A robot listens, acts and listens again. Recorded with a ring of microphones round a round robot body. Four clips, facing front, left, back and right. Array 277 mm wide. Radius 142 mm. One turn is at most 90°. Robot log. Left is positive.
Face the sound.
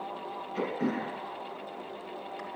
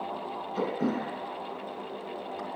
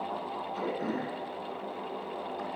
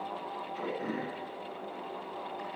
note: The throat clearing: 70° left.
cmd yaw +70
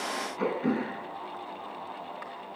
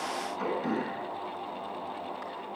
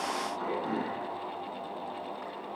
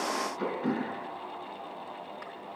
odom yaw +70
note: The throat clearing is now 10° right.
cmd yaw -10
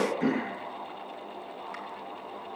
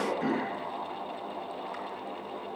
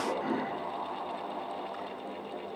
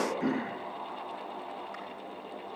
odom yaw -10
end: Facing the throat clearing, 2 to 4 m away.